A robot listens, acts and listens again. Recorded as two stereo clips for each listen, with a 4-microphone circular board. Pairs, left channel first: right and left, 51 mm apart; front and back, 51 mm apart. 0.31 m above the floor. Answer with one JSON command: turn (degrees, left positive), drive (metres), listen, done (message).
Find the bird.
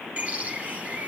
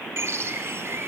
{"turn": 150}
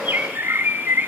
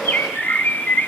{"turn": 45}
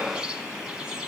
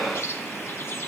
{"turn": 20}
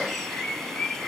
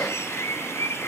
{"done": "Facing the bird."}